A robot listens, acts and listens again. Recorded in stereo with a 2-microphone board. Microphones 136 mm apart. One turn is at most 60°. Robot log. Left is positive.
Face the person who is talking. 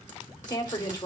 note: The woman speaking: about 30° left or 150° left.
cmd yaw +30
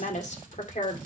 note: So it is at 120° left.
cmd yaw +60
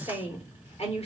note: The woman speaking is now 50° left.
cmd yaw +50
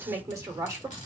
note: The woman speaking is now 20° right.
cmd yaw -20
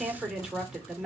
end: Found it: a woman speaking, straight ahead.